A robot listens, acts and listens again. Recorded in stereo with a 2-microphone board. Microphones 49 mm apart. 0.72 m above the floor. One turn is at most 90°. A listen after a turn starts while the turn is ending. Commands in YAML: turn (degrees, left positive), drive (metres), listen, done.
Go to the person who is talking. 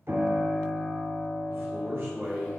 turn: -50
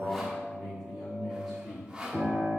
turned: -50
drive: 1.0
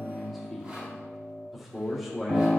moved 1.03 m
drive: 1.0
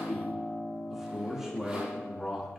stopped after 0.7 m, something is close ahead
turn: -10
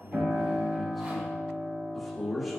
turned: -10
done: "I am next to the man speaking."